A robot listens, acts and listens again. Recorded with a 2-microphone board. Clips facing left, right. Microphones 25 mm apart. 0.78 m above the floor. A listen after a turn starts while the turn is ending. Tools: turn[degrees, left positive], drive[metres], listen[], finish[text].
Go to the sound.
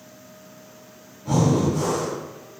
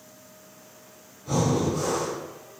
Action: turn[90]
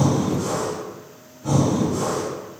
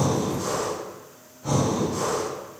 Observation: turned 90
Thought: So it is at 15° right.
Action: turn[-15]
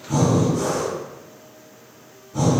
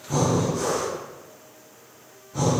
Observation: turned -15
Action: drive[1.0]
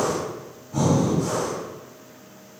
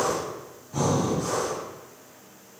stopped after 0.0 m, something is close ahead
Action: finish[Blocked. The breathing is further on, straight ahead.]